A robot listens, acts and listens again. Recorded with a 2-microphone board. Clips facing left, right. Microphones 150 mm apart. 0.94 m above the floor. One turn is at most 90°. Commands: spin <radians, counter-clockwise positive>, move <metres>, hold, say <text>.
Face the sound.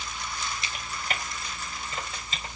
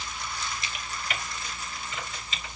spin 0.70
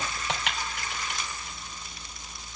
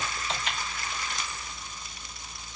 spin 1.57
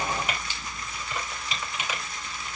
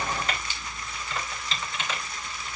spin 0.26
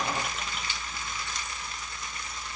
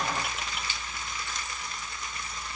hold
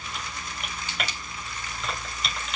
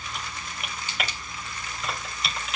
say Facing the typing on a keyboard.